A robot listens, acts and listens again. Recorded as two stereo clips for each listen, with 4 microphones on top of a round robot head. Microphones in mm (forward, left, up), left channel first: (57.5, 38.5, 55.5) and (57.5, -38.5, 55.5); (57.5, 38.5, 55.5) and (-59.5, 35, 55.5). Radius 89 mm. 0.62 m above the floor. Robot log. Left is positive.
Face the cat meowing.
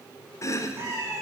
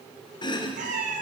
note: The cat meowing: 155° right.
cmd yaw -155
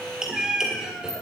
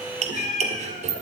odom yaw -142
end: Facing the cat meowing, 1 to 2 m away.